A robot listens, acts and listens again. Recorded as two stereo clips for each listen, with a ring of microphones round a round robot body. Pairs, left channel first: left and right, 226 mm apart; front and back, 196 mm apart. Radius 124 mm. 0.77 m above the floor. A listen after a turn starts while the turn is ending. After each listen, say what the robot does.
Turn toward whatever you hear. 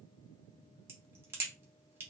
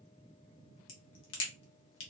Turn 10° right.
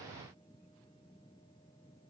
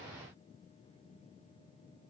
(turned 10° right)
I heard a crack from this way, but can't make it out now.